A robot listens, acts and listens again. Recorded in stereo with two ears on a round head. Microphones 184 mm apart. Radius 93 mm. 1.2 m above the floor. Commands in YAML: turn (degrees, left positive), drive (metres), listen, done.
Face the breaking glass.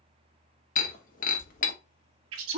turn: 45
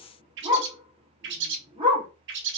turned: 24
listen: true
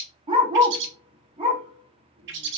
done: "I heard breaking glass, but can't make it out now. It was about 20° left or 115° left."